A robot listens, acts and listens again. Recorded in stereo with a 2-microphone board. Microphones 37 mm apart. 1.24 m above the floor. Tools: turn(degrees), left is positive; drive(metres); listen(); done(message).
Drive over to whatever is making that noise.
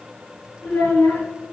turn(degrees=45)
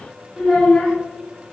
drive(metres=1.0)
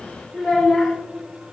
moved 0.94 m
drive(metres=1.0)
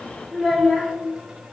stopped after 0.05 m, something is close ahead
turn(degrees=-10)
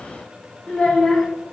done("I am next to the child speaking.")